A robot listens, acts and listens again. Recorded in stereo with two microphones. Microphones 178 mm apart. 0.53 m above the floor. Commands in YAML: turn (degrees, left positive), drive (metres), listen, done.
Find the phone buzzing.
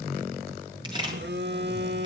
turn: -90
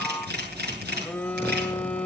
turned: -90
turn: 10
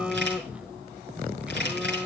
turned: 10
done: "Found it: a phone buzzing, straight ahead."